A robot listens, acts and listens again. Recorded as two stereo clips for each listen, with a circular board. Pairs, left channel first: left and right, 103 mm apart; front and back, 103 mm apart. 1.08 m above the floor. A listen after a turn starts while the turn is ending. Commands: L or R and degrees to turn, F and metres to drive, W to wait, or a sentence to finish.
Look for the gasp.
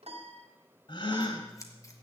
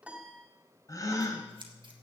L55
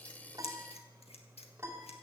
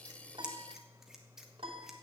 Facing where the gasp came from. I can't hear it now.